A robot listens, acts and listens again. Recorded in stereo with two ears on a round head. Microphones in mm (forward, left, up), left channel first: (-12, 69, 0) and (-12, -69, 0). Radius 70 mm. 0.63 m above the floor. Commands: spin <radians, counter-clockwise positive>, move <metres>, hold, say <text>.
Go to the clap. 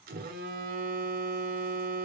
hold
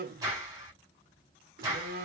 spin -0.35
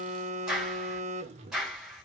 move 1.0
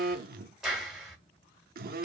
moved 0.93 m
move 1.0
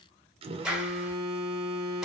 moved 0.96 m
move 1.0
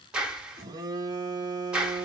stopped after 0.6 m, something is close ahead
say Arrived at the clap, straight ahead.